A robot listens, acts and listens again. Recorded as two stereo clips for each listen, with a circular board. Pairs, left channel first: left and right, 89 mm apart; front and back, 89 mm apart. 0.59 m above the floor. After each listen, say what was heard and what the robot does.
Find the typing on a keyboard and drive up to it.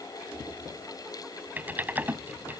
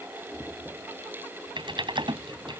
The typing on a keyboard: 160° right. Turn 160° right.
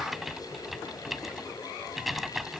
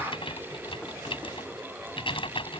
Drive 1.0 m forward.
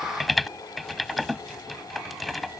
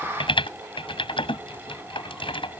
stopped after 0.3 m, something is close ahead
Blocked. The typing on a keyboard is further on, straight ahead.